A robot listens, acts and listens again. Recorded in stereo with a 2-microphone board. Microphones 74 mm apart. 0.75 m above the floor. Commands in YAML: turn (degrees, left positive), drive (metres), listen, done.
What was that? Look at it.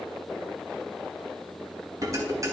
turn: -45
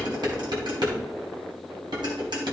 turn: -85
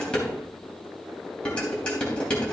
turn: 15
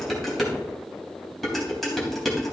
done: "Found it: dishes clattering, straight ahead."